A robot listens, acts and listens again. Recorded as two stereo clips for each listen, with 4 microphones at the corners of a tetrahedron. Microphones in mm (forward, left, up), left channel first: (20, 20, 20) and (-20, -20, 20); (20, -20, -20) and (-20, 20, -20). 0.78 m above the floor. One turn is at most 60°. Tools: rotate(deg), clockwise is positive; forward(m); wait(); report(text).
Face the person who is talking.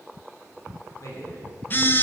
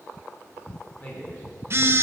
rotate(-20)
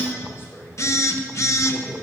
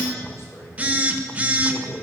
report("Found it: a man speaking, straight ahead.")